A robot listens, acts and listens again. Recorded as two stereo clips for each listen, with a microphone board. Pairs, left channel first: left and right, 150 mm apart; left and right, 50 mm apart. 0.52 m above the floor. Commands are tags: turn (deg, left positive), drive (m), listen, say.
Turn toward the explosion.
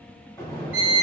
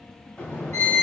<turn deg="20"/>
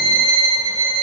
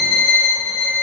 <listen/>
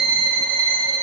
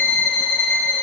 <say>I heard an explosion, but can't make it out now. It was about straight ahead or 140° left.</say>